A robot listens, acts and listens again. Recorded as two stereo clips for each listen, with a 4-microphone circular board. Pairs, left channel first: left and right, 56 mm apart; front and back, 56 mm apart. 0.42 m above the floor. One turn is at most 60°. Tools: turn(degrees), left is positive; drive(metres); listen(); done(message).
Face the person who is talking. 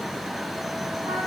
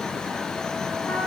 listen()
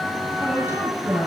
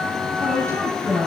turn(degrees=-60)
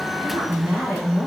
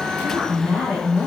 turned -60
turn(degrees=-60)
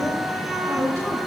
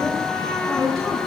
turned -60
turn(degrees=-60)
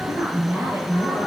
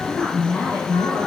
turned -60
turn(degrees=-50)
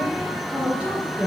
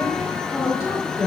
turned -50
turn(degrees=-25)
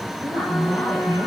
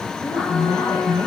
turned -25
done("Facing the woman speaking.")